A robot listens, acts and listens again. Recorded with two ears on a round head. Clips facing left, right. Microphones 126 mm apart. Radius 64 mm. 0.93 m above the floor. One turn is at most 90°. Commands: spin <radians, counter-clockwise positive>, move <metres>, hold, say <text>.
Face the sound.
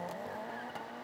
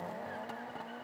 hold
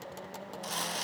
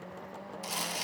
spin -0.52
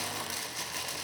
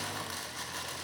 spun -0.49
spin 0.26
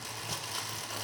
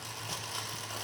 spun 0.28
say Facing the crumpling, under 1 m away.